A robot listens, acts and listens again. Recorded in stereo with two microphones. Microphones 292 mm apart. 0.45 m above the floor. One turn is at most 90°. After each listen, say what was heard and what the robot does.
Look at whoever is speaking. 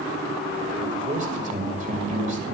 The man speaking: about 30° right or 150° right. Turn 30° right.
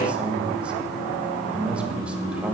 Found it: a man speaking, straight ahead, 2 to 4 m away.